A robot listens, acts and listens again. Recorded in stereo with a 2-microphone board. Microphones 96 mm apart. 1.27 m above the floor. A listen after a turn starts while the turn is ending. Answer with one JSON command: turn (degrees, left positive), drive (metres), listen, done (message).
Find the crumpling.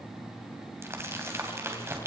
{"turn": -25}
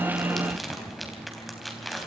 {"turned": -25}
{"done": "Facing the crumpling, 2 to 4 m away."}